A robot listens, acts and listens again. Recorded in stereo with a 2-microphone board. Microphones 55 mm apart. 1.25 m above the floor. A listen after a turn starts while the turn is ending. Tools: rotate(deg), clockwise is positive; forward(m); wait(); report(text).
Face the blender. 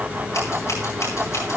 wait()
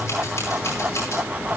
wait()
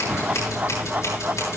report("I can't make out a blender, only scissors.")